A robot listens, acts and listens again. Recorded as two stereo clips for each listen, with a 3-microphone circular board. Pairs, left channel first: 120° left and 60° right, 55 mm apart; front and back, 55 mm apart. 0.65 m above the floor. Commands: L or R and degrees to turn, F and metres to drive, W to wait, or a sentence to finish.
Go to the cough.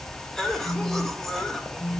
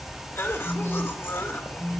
L40
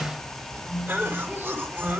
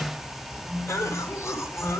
F1.0
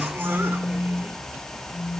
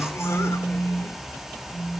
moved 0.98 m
W
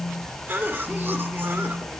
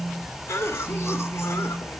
R10
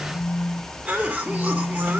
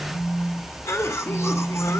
F1.0
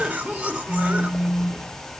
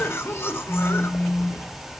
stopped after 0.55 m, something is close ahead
Arrived at the cough, straight ahead.